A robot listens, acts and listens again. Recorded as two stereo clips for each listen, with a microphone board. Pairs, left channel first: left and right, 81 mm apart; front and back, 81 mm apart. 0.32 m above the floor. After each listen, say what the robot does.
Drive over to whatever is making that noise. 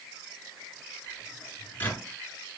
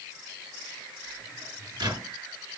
Turn 155° left.
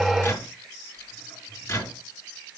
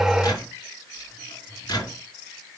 Turn 30° left.
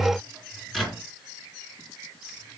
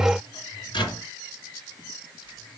Drive 1.0 m forward.
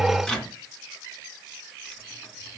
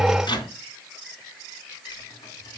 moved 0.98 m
Turn 10° left.
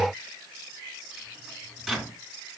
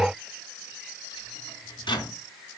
Drive 1.0 m forward.
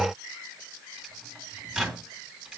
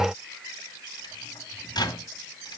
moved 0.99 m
Turn 10° right.
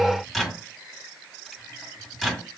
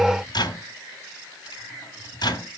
Drive 1.0 m forward.
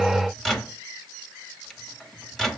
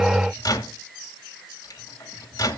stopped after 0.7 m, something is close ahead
Arrived at the microwave, straight ahead.